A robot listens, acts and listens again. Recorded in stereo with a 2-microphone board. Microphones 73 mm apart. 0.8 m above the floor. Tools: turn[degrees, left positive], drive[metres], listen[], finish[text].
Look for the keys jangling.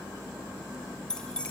Action: turn[30]
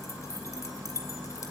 Thought: So it is at 140° left.
Action: turn[140]
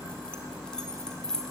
Thought: The keys jangling is now 10° left.
Action: turn[10]
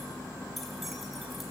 Action: listen[]
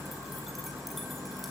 Action: listen[]
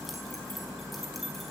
Action: finish[Facing where the keys jangling came from. I can't hear it now.]